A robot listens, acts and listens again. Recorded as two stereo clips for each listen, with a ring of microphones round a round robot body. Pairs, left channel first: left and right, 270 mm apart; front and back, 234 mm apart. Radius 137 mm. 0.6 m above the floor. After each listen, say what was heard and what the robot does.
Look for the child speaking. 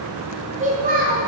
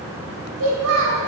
The child speaking: 145° right. Turn 145° right.
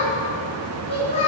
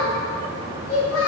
The child speaking is now 20° left. Turn 20° left.
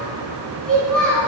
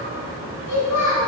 Facing the child speaking.